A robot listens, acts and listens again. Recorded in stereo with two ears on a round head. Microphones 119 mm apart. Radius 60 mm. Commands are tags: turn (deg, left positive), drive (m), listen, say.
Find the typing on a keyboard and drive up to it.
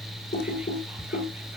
<turn deg="90"/>
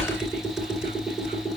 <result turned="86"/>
<drive m="1.0"/>
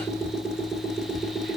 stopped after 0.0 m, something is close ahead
<say>Something is in my way. I am facing the typing on a keyboard but have not reached it.</say>